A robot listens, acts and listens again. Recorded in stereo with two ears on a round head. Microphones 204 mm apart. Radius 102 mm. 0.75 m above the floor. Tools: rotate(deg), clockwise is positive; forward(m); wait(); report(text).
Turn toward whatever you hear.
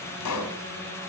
rotate(-90)
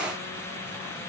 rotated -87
report("I heard a pop from this way, but can't make it out now.")